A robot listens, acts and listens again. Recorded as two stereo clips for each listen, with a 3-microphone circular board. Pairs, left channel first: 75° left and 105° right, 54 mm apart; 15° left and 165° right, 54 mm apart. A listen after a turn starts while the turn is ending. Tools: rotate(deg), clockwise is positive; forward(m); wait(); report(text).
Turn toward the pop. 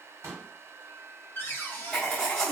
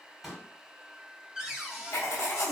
rotate(80)
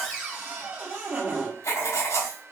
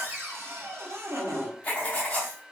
report("Facing where the pop came from. I can't hear it now.")